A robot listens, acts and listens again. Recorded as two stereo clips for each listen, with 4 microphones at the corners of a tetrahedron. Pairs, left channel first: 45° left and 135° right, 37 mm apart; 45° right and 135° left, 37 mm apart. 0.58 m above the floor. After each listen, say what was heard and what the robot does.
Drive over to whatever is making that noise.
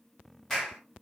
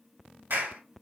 The clap: 130° left. Turn 130° left.
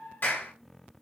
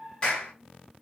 The clap is now 20° left. Turn 20° left.
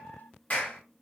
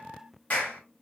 Drive 1.0 m forward.
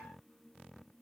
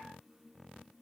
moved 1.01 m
Keep listening.
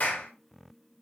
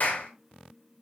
Drive 1.0 m forward.
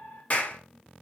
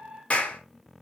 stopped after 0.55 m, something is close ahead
I am next to the clap.